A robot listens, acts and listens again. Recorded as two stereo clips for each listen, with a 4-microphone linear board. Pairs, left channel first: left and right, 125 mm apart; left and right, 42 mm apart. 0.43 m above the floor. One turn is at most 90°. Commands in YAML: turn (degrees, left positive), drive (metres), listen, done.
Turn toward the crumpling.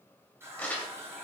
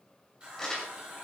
turn: 30
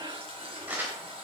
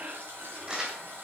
turn: -15
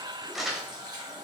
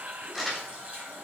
done: "Found it: crumpling, straight ahead, 2 to 4 m away."